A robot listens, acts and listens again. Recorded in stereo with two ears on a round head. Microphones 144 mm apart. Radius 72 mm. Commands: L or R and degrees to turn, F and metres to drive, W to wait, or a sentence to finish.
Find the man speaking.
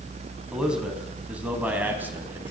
R30
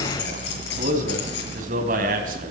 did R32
R125
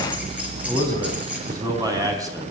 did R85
R20
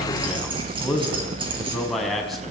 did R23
Facing the man speaking.